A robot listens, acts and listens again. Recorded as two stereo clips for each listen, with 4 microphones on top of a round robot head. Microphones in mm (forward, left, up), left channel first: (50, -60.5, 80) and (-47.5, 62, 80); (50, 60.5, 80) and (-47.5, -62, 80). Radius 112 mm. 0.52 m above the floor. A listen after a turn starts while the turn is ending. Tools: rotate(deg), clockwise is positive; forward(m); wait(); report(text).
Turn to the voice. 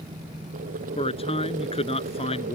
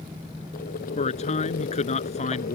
report("Found it: a man speaking, straight ahead.")